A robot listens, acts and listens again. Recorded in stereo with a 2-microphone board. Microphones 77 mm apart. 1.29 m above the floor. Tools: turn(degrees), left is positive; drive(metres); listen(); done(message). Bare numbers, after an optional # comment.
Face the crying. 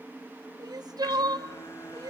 # The crying: about 60° right or 120° right.
turn(-60)
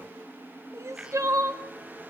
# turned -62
# So it is at 50° right.
turn(-50)
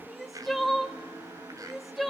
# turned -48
done("Facing the crying.")